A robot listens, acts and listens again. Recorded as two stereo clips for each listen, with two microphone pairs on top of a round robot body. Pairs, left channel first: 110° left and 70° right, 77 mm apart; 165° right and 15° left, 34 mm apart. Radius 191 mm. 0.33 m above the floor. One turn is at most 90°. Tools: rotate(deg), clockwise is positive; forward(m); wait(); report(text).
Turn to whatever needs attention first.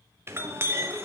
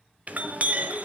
wait()
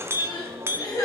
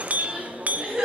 rotate(-75)
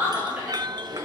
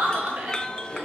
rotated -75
report("Facing the crying, 2 to 4 m away.")